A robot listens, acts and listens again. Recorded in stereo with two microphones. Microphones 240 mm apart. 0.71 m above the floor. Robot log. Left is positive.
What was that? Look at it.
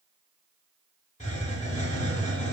note: The hiss: about 30° left or 150° left.
cmd yaw +30
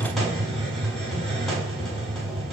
end: Found it: a hiss, straight ahead.